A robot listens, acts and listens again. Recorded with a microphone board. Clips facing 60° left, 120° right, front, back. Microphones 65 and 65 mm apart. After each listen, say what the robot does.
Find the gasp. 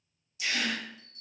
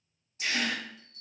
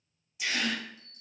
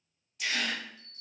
Turn 80° right.
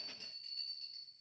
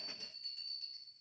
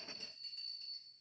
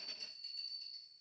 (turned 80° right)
I heard a gasp from this way, but can't make it out now.